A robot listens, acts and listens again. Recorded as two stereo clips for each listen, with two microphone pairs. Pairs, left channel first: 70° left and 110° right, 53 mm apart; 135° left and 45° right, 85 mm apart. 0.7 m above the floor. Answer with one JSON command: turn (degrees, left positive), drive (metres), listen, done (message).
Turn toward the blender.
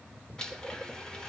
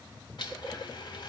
{"turn": 145}
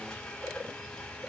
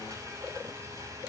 {"done": "Facing the blender."}